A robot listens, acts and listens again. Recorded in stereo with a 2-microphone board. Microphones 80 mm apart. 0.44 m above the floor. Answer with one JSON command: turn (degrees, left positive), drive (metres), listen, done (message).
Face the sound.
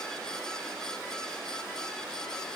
{"listen": true}
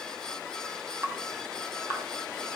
{"turn": -30}
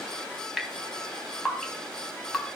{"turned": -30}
{"done": "Facing the dripping, 2 to 4 m away."}